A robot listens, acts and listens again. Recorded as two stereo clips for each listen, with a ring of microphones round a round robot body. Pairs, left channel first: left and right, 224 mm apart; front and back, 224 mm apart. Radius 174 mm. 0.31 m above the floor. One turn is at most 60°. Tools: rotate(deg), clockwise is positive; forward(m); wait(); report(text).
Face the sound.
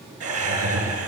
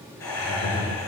rotate(60)
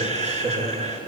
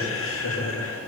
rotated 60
rotate(30)
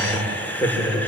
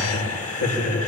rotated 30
rotate(-10)
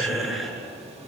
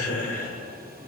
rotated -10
report("Found it: laughter, straight ahead, over 4 m away.")